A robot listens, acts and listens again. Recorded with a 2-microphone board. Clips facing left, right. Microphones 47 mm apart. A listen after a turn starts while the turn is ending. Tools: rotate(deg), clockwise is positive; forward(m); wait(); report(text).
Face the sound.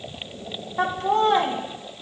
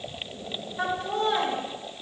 rotate(-65)
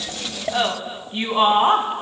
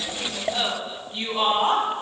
rotate(-35)
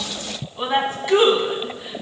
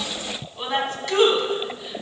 rotate(-15)
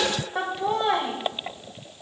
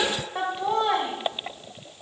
report("Found it: laughter, straight ahead.")